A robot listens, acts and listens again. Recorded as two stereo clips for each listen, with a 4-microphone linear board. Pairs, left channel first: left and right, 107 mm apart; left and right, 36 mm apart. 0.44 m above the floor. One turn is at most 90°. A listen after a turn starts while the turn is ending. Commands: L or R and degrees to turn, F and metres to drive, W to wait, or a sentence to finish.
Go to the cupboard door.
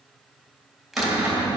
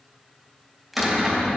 R30
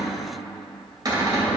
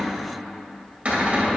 R90
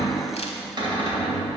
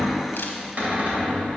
R55
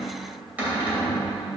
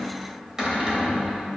R15
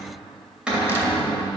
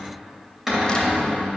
F1.0
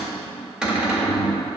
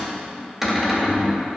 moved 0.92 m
R10
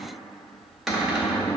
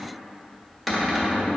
F1.0
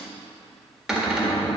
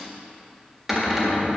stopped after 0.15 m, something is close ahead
Arrived at the cupboard door, straight ahead.